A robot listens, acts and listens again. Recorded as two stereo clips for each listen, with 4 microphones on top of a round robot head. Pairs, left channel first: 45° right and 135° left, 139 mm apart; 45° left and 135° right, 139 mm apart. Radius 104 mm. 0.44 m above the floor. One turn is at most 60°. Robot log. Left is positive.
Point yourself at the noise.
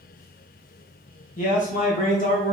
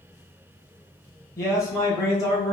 note: The man speaking: 20° right.
cmd yaw -20
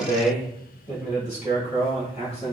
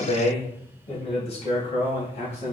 end: Facing the man speaking.